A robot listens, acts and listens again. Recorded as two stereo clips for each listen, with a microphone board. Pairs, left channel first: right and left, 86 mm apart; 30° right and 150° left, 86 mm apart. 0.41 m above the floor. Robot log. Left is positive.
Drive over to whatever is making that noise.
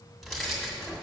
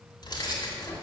cmd fwd 1.0
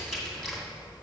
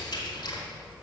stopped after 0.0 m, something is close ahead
end: Something is in my way. I am facing the keys jangling but have not reached it.